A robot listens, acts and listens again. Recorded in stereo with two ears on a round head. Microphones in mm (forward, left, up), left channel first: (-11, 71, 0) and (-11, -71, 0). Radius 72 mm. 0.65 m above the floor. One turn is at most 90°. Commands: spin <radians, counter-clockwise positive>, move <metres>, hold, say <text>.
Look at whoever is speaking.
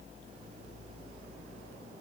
hold
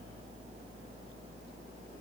hold
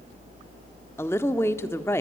spin 0.26
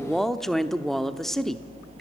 say Facing the woman speaking.